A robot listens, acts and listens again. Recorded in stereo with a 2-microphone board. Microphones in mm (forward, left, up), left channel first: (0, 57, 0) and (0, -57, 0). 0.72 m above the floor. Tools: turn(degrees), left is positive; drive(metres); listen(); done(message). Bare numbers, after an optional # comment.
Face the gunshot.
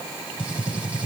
turn(-30)
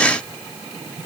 listen()
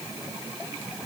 done("I heard a gunshot, but can't make it out now. It was about 20° left or 140° right.")